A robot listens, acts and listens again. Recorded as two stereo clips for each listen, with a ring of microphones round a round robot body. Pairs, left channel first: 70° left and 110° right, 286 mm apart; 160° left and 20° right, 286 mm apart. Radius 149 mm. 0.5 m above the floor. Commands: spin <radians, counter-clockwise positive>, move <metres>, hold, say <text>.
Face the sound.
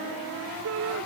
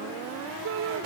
spin -1.22
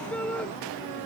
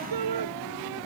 spin -0.35
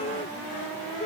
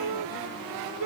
say Found it: a shout, straight ahead.